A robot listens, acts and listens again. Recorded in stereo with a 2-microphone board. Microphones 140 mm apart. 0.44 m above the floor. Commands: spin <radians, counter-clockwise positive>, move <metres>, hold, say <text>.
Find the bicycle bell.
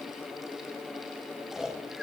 hold
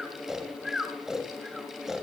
hold
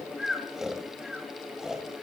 say I can't make out a bicycle bell to turn to.